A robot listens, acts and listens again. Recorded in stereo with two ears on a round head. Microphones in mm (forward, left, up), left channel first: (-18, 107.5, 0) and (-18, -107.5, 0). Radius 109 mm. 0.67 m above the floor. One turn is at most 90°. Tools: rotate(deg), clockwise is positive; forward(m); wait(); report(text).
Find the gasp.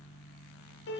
wait()
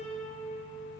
wait()
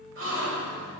rotate(55)
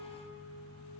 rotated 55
wait()
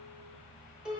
report("I heard a gasp, but can't make it out now. It was about straight ahead or 70° right.")